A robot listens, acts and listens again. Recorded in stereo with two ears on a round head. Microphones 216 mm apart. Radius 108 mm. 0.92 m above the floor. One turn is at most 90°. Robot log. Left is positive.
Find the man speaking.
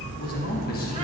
note: The man speaking: about 40° left or 140° left.
cmd yaw +40
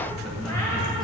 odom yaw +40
cmd idle
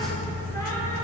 cmd idle
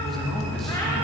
end: Found it: a man speaking, straight ahead.